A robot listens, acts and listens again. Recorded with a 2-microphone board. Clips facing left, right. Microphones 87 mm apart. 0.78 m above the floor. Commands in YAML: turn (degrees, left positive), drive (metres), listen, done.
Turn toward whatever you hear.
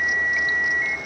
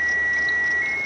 listen: true
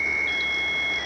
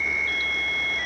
listen: true
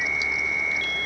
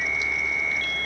done: "I can't make out anything to turn to."